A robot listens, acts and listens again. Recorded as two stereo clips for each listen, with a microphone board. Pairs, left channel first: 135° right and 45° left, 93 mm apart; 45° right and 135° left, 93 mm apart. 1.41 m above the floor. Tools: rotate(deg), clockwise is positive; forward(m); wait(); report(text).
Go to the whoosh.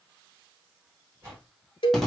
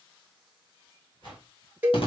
rotate(15)
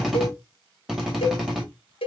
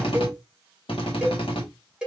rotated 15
wait()
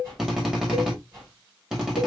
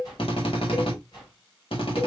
forward(1.0)
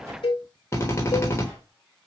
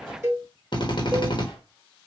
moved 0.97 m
rotate(10)
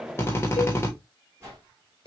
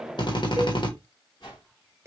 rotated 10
rotate(10)
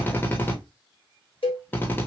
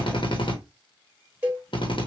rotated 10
wait()
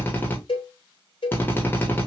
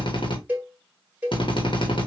wait()
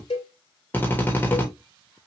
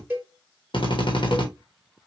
report("Facing where the whoosh came from. I can't hear it now. I did not reach it.")